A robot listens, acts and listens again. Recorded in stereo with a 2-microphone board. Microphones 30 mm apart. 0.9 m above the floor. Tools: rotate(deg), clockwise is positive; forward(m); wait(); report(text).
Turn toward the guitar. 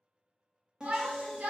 rotate(25)
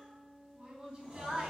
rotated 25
rotate(135)
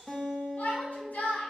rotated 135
rotate(-15)
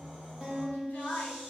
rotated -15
report("Facing the guitar.")